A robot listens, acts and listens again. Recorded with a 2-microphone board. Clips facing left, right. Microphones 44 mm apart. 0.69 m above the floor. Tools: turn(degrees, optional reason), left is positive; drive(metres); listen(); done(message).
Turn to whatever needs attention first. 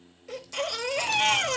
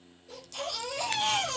turn(degrees=70, reason="The baby crying: about 70° left or 110° left.")
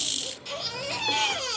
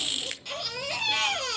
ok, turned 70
done("Found it: a baby crying, straight ahead.")